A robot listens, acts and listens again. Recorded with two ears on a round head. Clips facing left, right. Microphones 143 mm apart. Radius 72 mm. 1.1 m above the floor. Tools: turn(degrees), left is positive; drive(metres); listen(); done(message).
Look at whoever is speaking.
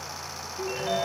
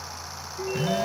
listen()
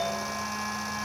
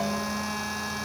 listen()
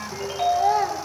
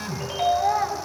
turn(degrees=35)
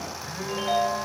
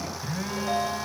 listen()
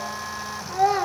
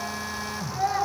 turn(degrees=110)
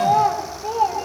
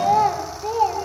done("Facing the child speaking, 2 to 4 m away.")